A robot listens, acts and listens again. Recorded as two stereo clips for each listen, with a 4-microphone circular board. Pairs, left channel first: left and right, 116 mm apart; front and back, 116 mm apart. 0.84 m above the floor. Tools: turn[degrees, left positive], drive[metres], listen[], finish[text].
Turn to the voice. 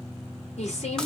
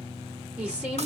Thought: The woman speaking: 100° left.
Action: turn[100]
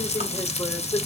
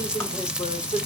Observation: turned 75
Thought: The woman speaking is now 25° left.
Action: turn[25]
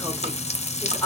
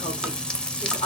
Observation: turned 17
Thought: The woman speaking is now 10° left.
Action: turn[10]
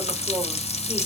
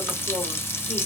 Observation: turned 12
Action: listen[]
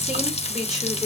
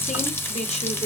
Action: finish[Found it: a woman speaking, straight ahead, 2 to 4 m away.]